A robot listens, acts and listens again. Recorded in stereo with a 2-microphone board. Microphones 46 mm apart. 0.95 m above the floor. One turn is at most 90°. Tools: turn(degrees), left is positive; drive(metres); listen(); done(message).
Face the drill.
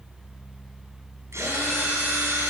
turn(degrees=-90)
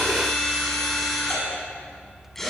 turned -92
done("Facing the drill.")